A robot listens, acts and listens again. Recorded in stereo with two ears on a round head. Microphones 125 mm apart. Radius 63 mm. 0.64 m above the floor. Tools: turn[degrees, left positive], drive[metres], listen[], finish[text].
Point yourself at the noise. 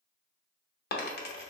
Thought: The dropped coin: about 75° left or 105° left.
Action: turn[75]
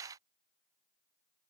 Action: listen[]
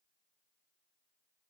Action: finish[I heard a dropped coin, but can't make it out now. It was about straight ahead or 30° left.]